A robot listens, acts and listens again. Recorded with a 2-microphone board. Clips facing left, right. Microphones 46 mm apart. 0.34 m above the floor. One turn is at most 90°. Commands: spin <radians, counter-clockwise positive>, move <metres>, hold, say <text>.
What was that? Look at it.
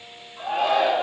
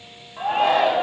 spin -0.87
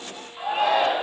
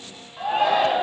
spin -0.17
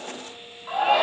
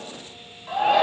say Found it: a shout, straight ahead.